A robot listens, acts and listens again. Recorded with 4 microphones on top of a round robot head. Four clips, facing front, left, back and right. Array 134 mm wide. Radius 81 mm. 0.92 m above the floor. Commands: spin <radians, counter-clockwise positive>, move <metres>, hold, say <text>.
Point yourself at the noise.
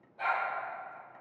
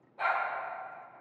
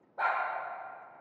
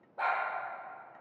spin -2.62
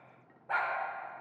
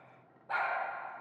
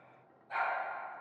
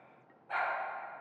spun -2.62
spin 0.44
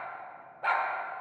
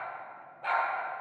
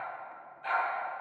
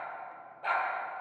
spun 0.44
say Facing the dog barking.